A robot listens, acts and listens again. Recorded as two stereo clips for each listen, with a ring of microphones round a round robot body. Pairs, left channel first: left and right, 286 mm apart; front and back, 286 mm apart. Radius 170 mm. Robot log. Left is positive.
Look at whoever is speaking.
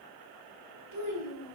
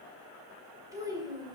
note: The child speaking: 105° right.
cmd yaw -105
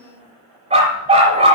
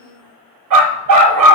end: Found it: a child speaking, straight ahead.